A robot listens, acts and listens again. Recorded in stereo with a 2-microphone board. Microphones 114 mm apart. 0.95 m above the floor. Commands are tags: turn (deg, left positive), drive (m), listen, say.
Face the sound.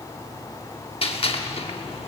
<turn deg="55"/>
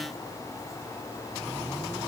<listen/>
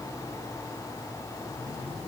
<say>I heard a gunshot, but can't make it out now. It was about straight ahead or 70° left.</say>